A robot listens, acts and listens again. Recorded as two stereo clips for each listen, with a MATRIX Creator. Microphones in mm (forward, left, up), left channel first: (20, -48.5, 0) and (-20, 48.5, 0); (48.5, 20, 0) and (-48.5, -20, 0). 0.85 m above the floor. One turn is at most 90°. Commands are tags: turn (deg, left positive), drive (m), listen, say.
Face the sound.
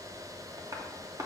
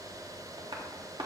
<turn deg="90"/>
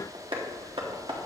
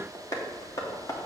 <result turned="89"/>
<turn deg="80"/>
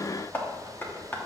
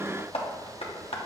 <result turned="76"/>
<say>Found it: tapping, straight ahead, 1 to 2 m away.</say>